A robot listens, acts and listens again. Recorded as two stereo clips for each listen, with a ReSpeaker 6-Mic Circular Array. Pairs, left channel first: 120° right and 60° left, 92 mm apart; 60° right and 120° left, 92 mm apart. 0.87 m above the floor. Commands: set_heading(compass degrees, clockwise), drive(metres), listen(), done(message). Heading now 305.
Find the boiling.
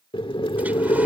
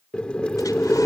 set_heading(85)
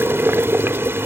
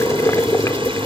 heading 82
done("Facing the boiling.")